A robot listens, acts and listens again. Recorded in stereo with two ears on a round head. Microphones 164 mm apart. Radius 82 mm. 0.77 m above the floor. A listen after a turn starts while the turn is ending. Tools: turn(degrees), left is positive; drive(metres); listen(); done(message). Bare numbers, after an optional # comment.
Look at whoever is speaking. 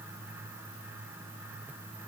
listen()
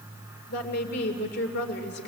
# The woman speaking: about 65° left or 115° left.
turn(65)
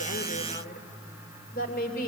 # So it is at 50° left.
turn(50)
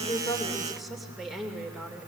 done("Found it: a woman speaking, straight ahead.")